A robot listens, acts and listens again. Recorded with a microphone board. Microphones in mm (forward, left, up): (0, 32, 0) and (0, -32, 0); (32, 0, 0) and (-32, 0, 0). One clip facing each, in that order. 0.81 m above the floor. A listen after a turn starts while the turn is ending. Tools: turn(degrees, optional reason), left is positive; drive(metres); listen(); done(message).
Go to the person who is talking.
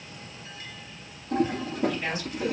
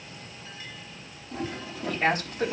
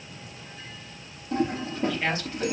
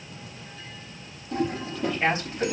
turn(degrees=-110, reason="The man speaking: 110° right.")
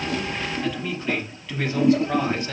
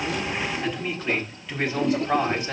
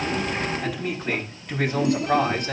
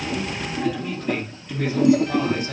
turn(degrees=-10, reason="The man speaking is now 10° right.")
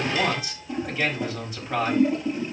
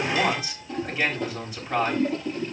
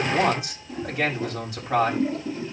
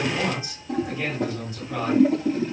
drive(metres=1.0)
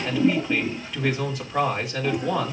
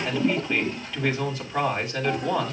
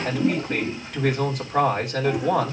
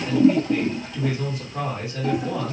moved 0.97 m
turn(degrees=10, reason="The man speaking is now 10° left.")
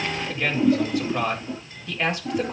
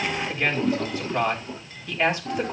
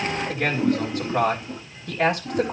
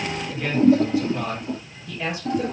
drive(metres=1.0)
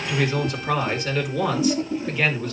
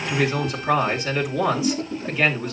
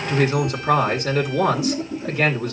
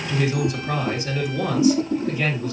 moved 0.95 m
drive(metres=1.0)
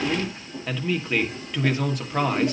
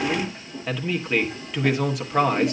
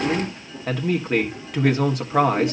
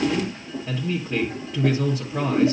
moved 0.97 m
drive(metres=1.0)
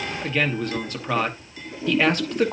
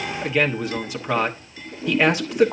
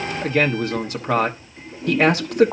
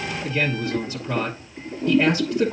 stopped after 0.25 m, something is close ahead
done("Arrived at the man speaking, straight ahead.")